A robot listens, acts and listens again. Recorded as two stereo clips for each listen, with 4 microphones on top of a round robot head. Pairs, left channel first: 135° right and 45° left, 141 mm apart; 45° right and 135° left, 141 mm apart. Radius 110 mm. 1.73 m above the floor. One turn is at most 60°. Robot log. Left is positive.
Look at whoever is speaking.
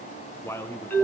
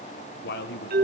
note: The man speaking: 60° right.
cmd yaw -60
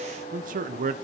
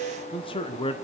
note: The man speaking is now 10° left.
cmd yaw +10
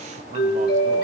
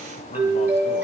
cmd idle
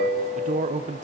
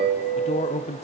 end: Found it: a man speaking, straight ahead.